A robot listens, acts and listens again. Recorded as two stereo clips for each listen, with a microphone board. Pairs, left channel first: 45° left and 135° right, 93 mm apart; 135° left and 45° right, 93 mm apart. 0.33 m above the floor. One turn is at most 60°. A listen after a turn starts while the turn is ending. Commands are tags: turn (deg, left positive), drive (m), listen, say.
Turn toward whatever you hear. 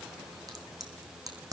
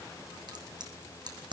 <turn deg="-60"/>
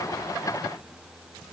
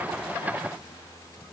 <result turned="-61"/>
<turn deg="-25"/>
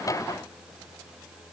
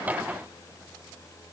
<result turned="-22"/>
<say>Facing where the crack came from. I can't hear it now.</say>